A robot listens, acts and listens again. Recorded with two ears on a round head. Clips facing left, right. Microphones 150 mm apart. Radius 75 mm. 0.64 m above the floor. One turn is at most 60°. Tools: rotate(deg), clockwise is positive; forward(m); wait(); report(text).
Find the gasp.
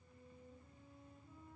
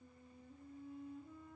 wait()
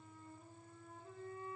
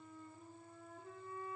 wait()
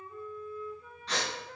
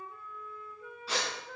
rotate(30)
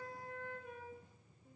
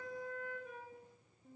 wait()
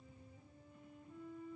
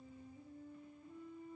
report("I heard a gasp, but can't make it out now. It was about 25° left or 145° right.")